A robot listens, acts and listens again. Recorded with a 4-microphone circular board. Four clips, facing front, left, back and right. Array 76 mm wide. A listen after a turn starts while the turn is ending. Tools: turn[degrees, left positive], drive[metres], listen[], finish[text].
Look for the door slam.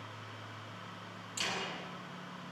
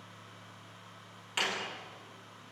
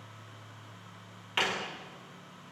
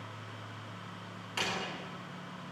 Thought: The door slam: 175° left.
Action: turn[175]
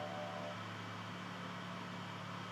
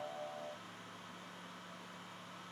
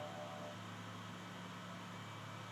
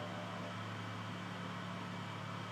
Action: finish[Facing where the door slam came from. I can't hear it now.]